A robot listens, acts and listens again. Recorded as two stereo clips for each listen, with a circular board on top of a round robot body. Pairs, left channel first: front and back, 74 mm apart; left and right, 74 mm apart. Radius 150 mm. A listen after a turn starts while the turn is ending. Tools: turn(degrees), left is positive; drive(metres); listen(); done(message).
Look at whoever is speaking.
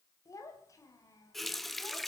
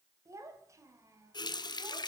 turn(degrees=-45)
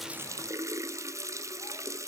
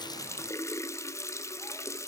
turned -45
listen()
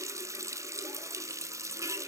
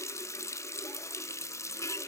listen()
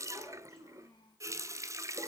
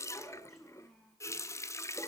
done("Found it: a child speaking, straight ahead.")